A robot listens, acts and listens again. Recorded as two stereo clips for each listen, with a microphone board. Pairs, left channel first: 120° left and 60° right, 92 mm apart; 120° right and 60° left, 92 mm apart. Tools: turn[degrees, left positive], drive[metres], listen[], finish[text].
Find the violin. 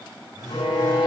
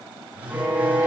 Thought: The violin: 130° left.
Action: turn[130]
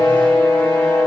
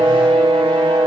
Thought: The violin is now 50° left.
Action: turn[50]
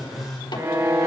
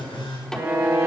Action: finish[Found it: a violin, straight ahead.]